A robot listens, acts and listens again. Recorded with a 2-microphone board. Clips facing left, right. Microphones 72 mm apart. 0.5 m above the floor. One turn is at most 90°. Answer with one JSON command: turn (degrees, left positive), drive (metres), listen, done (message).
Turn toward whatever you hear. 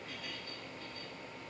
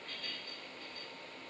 {"listen": true}
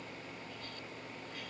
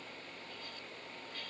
{"listen": true}
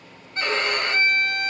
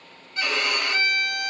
{"turn": 30}
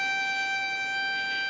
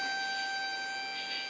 {"turn": 90}
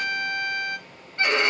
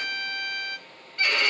{"turn": 30}
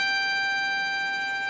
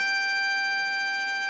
{"done": "Facing the violin, 2 to 4 m away."}